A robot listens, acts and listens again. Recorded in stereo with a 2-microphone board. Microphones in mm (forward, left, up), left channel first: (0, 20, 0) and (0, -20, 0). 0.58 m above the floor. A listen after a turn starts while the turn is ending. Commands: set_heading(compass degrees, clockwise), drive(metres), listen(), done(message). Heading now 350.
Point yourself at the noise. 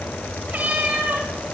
set_heading(55)
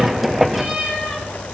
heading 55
set_heading(75)
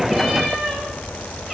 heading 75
done("Facing the cat meowing.")